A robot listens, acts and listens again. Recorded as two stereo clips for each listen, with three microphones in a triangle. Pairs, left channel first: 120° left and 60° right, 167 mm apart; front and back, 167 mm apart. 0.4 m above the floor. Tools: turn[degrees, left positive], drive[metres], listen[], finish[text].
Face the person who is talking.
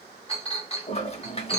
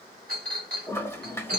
Action: listen[]
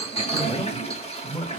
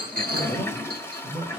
Thought: The man speaking: 40° left.
Action: turn[40]
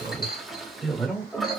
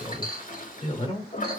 Thought: The man speaking is now 35° left.
Action: turn[35]
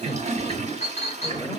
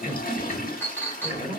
Thought: The man speaking is now 25° left.
Action: turn[25]
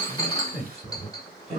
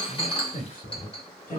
Thought: The man speaking is now 10° left.
Action: turn[10]
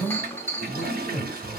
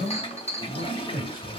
Action: finish[Found it: a man speaking, straight ahead.]